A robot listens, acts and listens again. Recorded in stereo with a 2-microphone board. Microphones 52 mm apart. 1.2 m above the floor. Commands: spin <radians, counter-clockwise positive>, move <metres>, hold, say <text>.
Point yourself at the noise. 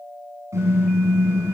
spin -1.13
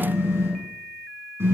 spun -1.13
spin -0.96
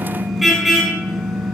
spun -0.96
say Facing the car horn, over 4 m away.